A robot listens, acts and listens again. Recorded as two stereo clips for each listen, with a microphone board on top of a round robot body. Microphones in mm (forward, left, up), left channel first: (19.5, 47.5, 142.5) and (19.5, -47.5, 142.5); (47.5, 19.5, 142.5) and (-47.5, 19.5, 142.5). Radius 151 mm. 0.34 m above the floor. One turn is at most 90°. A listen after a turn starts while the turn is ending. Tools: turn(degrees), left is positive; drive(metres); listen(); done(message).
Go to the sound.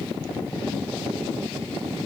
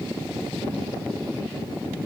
listen()
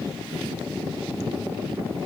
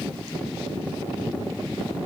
listen()
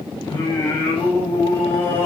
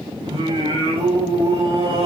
turn(degrees=90)
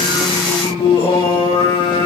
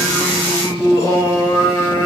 turn(degrees=60)
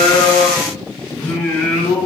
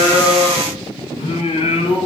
turn(degrees=20)
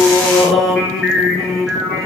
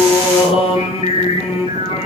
drive(metres=1.0)
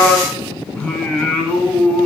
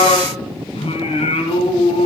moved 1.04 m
turn(degrees=10)
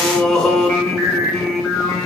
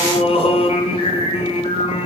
drive(metres=1.0)
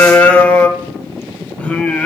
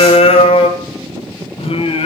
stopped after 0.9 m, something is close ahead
turn(degrees=10)
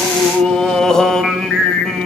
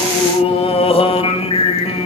done("Arrived at the singing, straight ahead.")